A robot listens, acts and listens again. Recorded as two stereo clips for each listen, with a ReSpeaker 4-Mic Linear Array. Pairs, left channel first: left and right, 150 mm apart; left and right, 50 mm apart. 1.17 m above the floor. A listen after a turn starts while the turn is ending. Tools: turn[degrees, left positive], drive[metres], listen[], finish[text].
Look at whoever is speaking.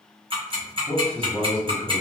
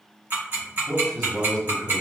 Action: turn[30]
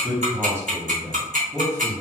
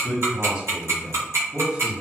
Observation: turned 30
Thought: So it is at 20° right.
Action: turn[-20]
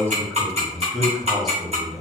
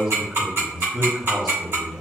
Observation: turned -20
Action: finish[Found it: a man speaking, straight ahead, 1 to 2 m away.]